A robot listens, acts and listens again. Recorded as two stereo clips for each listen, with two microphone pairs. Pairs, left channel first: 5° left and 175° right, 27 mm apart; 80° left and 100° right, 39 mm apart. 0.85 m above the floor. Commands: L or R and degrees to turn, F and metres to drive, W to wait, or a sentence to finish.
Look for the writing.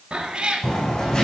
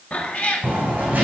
R50
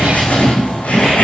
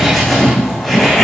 Found it: writing, straight ahead.